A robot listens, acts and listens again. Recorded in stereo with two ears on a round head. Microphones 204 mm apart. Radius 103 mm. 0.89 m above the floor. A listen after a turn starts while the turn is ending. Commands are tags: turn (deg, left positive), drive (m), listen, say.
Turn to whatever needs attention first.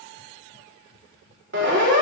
<turn deg="-50"/>
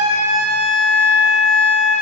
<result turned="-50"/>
<say>Facing the siren, over 4 m away.</say>